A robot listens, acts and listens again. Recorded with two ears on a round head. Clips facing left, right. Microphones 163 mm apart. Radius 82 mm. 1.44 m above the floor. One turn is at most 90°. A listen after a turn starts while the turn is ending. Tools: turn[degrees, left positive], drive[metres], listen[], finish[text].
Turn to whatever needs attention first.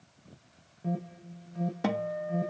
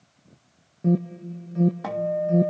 Thought: The alarm: about 60° right or 120° right.
Action: turn[-60]
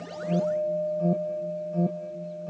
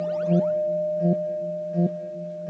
Thought: So it is at 15° right.
Action: turn[-15]
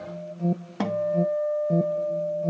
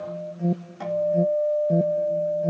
Thought: The alarm is now 10° right.
Action: turn[-10]
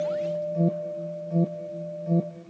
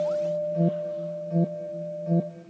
Action: finish[Found it: an alarm, straight ahead.]